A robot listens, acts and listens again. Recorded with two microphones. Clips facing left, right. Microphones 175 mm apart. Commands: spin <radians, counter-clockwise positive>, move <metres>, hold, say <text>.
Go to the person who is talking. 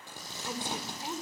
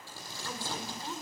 spin 0.26
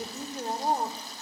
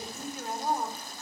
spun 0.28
spin 2.62
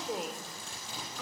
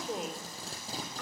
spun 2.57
move 1.0
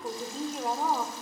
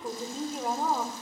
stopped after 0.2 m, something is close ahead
say Blocked. The woman speaking is further on, straight ahead.